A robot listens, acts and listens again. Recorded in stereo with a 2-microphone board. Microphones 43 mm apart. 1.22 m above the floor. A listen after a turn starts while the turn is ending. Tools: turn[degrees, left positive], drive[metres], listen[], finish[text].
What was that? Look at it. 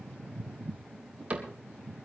Thought: The cupboard door: about 30° right or 150° right.
Action: turn[-30]
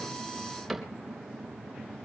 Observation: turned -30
Action: finish[Facing the cupboard door, 2 to 4 m away.]